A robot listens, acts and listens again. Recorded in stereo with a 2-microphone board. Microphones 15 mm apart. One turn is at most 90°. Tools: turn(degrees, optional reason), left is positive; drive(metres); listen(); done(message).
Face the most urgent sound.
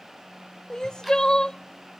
turn(degrees=50, reason="The crying: about 50° left or 130° left.")
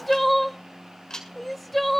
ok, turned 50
done("Facing the crying.")